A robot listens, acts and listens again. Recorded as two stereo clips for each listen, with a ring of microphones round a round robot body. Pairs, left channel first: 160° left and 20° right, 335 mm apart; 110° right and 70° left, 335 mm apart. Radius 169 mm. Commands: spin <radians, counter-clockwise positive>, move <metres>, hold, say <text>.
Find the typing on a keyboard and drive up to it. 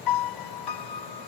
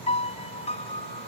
hold
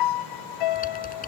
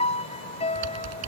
spin 1.57
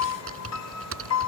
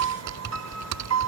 spin 0.52
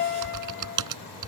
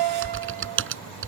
spin 0.26
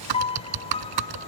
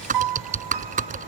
move 1.0
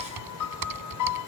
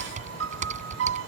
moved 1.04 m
move 1.0
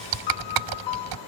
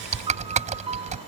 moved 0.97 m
move 1.0
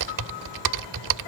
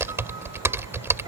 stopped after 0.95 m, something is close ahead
spin -0.26
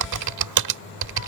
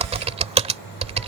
say I am next to the typing on a keyboard.